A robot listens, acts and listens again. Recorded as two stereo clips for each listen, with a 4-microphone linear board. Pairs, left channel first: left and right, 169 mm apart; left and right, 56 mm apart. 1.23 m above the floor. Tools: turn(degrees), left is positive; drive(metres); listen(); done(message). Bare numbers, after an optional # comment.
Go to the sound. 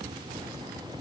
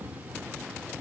listen()
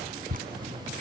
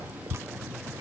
# The dripping: about 55° right or 125° right.
turn(-55)
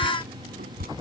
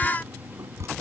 # So it is at 65° right.
turn(-65)
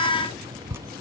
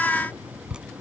# The dripping is now 15° right.
turn(-15)
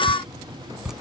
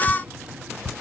drive(1.0)
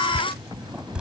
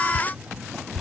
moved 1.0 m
drive(1.0)
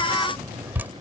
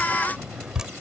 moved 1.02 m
# The dripping is now 15° right.
turn(-15)
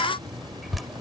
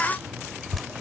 drive(1.0)
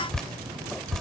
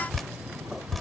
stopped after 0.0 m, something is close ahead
done("I am next to the dripping.")